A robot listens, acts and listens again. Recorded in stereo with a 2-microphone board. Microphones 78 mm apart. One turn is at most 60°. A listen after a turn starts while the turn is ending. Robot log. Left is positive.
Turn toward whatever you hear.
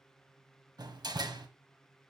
note: The door slam: about 60° right or 120° right.
cmd yaw -60
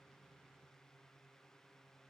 cmd idle
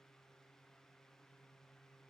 end: I heard a door slam, but can't make it out now. It was about straight ahead or 60° right.